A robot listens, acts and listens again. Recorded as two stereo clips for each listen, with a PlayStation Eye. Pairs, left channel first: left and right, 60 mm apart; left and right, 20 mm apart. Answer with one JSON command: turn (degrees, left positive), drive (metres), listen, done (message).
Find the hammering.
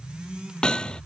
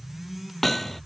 {"turn": 30}
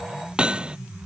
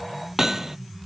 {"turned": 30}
{"turn": -15}
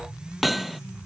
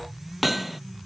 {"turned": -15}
{"done": "Facing the hammering."}